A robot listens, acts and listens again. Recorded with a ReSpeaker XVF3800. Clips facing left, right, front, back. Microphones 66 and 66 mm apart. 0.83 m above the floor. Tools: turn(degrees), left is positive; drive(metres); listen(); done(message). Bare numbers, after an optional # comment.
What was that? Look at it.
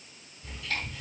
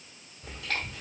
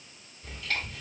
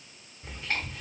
# The chewing: 115° right.
turn(-115)
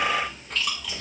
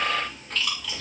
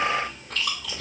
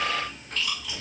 done("Found it: chewing, straight ahead.")